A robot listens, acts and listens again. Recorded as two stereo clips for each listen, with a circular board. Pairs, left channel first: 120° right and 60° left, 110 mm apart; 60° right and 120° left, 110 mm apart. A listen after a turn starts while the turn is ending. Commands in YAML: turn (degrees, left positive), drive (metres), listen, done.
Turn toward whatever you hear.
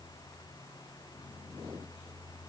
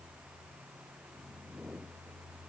listen: true
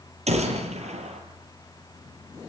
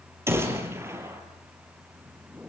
turn: 55
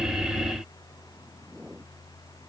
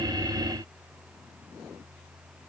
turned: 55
done: "I heard a gunshot from this way, but can't make it out now."